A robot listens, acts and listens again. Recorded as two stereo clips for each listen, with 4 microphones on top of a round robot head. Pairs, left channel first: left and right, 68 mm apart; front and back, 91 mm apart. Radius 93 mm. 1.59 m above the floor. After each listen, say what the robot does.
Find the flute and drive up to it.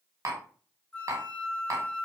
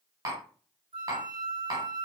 Turn 165° left.
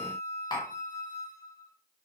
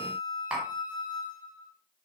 Turn 30° left.
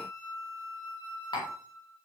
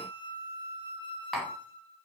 Turn 20° left.
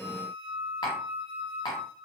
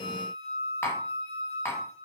Drive 1.0 m forward.
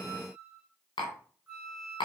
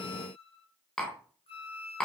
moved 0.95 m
Drive 1.0 m forward.
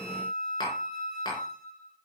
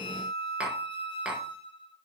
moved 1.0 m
Drive 1.0 m forward.
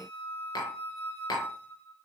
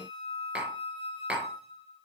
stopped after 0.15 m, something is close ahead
Arrived at the flute, straight ahead.